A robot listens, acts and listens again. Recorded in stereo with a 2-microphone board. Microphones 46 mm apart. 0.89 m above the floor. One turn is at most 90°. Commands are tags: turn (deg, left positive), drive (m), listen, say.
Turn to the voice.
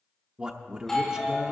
<turn deg="-20"/>
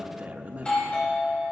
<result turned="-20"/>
<turn deg="-90"/>
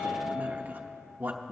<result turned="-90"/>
<turn deg="-40"/>
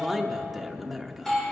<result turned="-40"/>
<say>Found it: a man speaking, straight ahead, under 1 m away.</say>